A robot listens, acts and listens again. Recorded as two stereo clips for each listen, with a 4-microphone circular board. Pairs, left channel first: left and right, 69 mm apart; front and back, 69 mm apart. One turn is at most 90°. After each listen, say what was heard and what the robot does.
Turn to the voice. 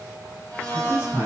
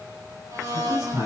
The man speaking: 160° right. Turn 90° right.
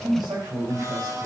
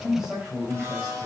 The man speaking is now 100° right. Turn 90° right.
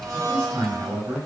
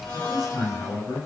The man speaking is now 40° right. Turn 40° right.
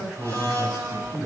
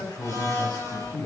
The man speaking is now 20° right. Turn 20° right.
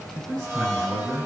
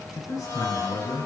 Facing the man speaking, over 4 m away.